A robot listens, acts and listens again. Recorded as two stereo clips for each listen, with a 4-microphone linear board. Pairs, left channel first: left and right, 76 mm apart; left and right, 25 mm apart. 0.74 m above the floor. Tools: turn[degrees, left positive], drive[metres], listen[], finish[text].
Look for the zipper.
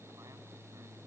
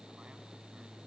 Action: listen[]
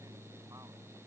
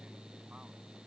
Action: listen[]
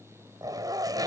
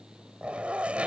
Thought: The zipper: about 55° right or 125° right.
Action: turn[-55]
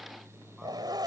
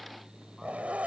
Thought: So it is at 70° right.
Action: turn[-70]
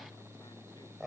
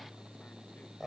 Action: finish[Found it: a zipper, straight ahead.]